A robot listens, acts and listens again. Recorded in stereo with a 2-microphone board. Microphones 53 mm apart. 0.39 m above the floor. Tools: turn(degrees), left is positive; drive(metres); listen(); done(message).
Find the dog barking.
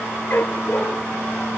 turn(degrees=40)
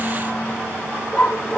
turn(degrees=10)
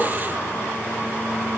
listen()
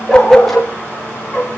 done("Found it: a dog barking, straight ahead, over 4 m away.")